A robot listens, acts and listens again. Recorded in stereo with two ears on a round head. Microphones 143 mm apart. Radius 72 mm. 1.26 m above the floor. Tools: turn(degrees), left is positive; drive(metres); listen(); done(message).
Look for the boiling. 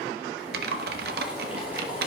turn(degrees=-30)
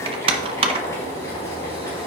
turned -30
turn(degrees=20)
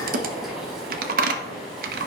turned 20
done("Found it: boiling, straight ahead.")